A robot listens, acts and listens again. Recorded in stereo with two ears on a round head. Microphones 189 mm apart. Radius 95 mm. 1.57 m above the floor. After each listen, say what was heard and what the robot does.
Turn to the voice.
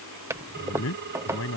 Turn 90° left.
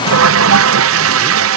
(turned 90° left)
Keep listening.
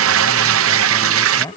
The man speaking is now 15° left. Turn 15° left.
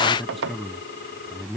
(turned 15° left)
Found it: a man speaking, straight ahead.